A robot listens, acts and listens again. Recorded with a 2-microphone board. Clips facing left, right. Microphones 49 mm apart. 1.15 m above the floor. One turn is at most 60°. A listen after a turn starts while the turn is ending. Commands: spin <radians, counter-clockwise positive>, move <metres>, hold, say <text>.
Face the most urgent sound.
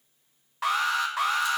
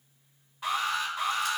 spin 1.05
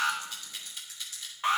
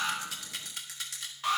spin 0.44
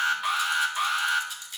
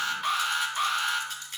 say Facing the alarm.